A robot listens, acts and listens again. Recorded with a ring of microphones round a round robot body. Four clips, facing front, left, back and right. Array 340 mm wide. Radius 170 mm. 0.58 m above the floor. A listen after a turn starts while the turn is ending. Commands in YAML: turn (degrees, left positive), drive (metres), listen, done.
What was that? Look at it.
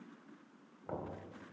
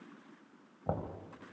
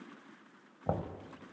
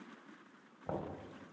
turn: 155
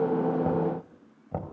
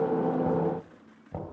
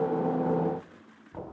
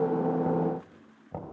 done: "Found it: knocking, straight ahead, 2 to 4 m away."